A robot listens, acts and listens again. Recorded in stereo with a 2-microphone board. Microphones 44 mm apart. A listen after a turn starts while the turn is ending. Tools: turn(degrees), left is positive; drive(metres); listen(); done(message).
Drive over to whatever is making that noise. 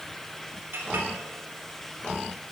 turn(degrees=-65)
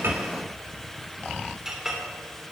turn(degrees=-10)
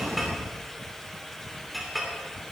drive(metres=1.0)
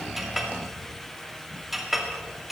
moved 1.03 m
drive(metres=1.0)
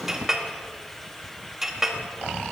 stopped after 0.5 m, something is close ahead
turn(degrees=-15)
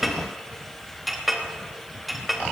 done("I am next to the clink.")